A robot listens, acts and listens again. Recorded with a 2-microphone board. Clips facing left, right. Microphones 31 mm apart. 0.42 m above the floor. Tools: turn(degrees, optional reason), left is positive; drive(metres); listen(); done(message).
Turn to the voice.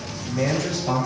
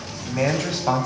turn(degrees=-65, reason="The man speaking: about 65° right or 115° right.")
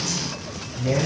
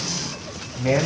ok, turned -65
turn(degrees=-55, reason="So it is at 55° right.")
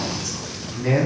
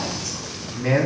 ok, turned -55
turn(degrees=-15, reason="The man speaking is now 15° right.")
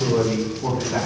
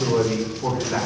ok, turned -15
turn(degrees=-10, reason="The man speaking is now 10° right.")
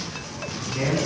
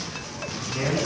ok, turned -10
done("Facing the man speaking.")